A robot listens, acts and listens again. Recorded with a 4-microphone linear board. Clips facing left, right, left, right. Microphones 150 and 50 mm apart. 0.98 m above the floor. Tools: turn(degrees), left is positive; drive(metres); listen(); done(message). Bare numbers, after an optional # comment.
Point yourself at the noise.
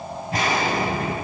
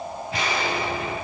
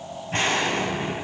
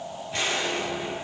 # The explosion: about 45° left or 135° left.
turn(45)
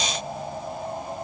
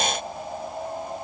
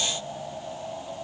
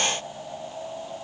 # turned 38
listen()
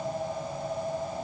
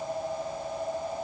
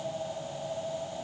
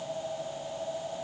done("I heard an explosion, but can't make it out now. It was about 5° left or 100° left.")